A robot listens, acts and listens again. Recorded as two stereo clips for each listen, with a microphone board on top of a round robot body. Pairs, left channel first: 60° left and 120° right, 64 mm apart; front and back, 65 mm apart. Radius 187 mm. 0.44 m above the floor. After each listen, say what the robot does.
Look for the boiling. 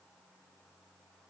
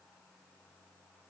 Keep listening.
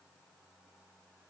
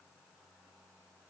Keep listening.
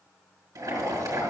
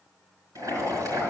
Turn 145° right.
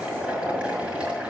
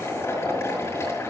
Turn 45° right.
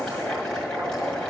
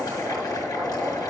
Turn 15° right.
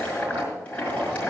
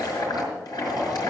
Turn 10° right.
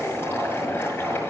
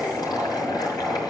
Facing the boiling, over 4 m away.